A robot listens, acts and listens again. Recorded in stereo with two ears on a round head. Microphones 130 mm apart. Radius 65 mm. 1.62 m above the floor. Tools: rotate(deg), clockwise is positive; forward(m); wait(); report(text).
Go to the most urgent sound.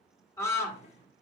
rotate(-20)
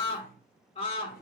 rotate(-135)
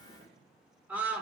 rotate(10)
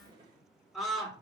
forward(1.0)
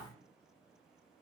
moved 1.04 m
wait()
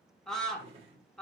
forward(1.0)
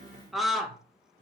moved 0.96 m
forward(1.0)
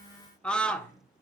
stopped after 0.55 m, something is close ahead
report("Arrived at the scream, straight ahead.")